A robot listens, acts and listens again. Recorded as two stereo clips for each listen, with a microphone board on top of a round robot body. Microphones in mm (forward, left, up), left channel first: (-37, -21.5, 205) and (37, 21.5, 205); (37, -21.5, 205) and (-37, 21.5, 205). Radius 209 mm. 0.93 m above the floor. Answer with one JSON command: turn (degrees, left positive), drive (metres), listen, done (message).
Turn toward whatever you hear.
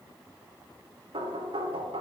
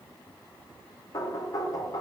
{"turn": 20}
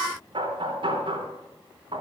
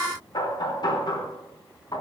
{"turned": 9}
{"turn": 10}
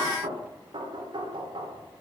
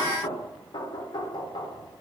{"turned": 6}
{"done": "Facing the knocking, 2 to 4 m away."}